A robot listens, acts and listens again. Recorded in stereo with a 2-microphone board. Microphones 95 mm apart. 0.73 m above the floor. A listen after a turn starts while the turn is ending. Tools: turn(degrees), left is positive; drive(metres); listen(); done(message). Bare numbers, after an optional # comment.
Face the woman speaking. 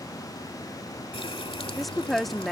turn(30)
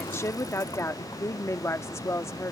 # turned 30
# So it is at 150° left.
turn(150)
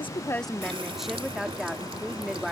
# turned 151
done("Found it: a woman speaking, straight ahead.")